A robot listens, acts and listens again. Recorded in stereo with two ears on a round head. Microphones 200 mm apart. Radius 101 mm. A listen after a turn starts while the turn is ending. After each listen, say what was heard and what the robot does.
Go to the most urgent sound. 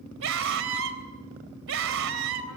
The scream: about 60° right or 120° right. Turn 60° right.
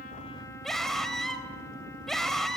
Drive 1.0 m forward.
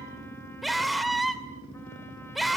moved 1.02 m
Drive 1.0 m forward.
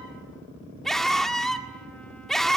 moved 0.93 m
Drive 1.0 m forward.
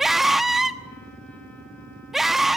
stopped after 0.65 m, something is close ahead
Arrived at the scream, straight ahead.